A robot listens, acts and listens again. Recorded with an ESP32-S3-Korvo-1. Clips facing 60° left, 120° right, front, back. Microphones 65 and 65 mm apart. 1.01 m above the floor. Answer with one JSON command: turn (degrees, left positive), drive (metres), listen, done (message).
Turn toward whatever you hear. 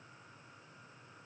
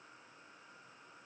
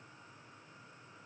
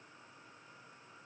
{"listen": true}
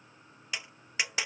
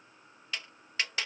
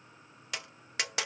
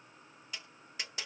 {"turn": -15}
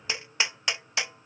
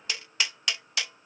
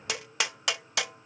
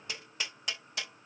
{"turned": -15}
{"done": "Facing the tapping."}